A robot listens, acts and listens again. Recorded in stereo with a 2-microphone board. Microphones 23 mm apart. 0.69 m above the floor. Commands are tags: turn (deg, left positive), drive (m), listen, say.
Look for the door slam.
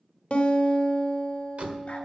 <turn deg="-65"/>
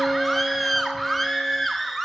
<listen/>
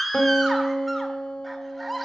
<say>I heard a door slam, but can't make it out now. It was about straight ahead or 50° right.</say>